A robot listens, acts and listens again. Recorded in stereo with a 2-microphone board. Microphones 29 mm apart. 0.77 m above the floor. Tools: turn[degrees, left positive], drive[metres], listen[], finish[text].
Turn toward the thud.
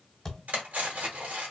Action: turn[30]
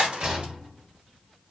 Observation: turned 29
Action: listen[]
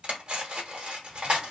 Action: finish[I heard a thud, but can't make it out now. It was about 20° right or 140° left.]